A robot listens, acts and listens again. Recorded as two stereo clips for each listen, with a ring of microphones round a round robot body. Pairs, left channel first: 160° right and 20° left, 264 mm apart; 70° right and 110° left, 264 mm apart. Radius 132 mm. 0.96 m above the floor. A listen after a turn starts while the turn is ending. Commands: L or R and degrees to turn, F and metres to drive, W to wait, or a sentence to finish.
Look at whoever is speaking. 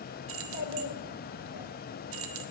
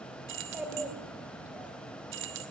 R165
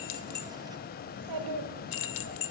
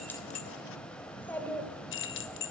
L15
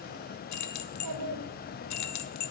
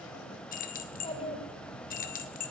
Facing the child speaking, 2 to 4 m away.